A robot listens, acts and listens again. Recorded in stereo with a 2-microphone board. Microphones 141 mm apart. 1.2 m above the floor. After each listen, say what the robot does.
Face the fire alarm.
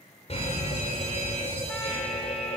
Turn 45° left.
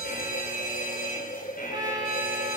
Turn 85° left.
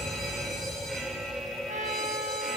Facing the fire alarm.